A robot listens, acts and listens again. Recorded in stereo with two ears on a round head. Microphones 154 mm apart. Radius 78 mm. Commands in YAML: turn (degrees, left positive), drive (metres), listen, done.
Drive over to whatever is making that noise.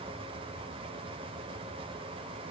listen: true
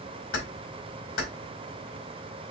turn: 90
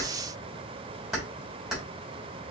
drive: 1.0
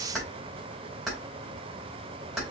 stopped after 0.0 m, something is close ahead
done: "Blocked. The keys jangling is further on, straight ahead."